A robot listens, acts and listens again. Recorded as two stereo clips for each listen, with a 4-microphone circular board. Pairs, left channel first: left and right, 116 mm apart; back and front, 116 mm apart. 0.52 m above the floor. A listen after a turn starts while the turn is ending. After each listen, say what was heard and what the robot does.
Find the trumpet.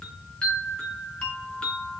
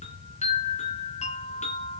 Keep listening.
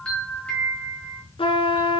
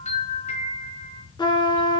The trumpet: 130° left. Turn 130° left.
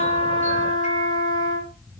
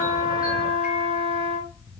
The trumpet is now 40° left. Turn 40° left.
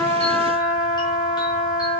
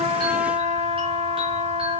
Found it: a trumpet, straight ahead, 2 to 4 m away.